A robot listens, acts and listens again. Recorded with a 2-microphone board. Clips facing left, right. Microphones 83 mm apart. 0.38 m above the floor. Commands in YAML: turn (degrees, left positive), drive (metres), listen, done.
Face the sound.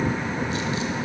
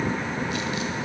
listen: true
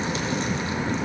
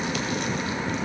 listen: true
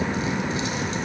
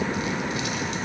done: "I can't make out anything."